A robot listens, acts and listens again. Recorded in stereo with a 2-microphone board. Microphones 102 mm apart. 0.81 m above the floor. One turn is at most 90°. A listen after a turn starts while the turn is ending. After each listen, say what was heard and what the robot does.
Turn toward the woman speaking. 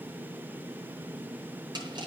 Keep listening.
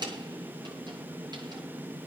Keep listening.
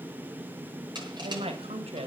Turn 90° right.
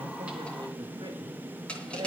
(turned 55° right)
So it is at 45° right. Turn 45° right.
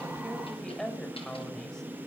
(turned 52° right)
Found it: a woman speaking, straight ahead.